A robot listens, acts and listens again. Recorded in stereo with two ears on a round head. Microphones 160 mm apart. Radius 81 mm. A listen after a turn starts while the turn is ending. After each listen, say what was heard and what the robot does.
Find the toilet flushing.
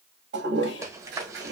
The toilet flushing: about 70° right or 110° right. Turn 70° right.
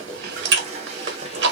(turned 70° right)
So it is at 35° right. Turn 35° right.
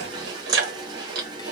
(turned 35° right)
Keep listening.
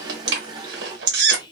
The toilet flushing is now 20° right. Turn 20° right.
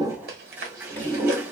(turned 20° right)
The toilet flushing is now 10° right. Turn 10° right.
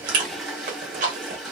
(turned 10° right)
Facing the toilet flushing.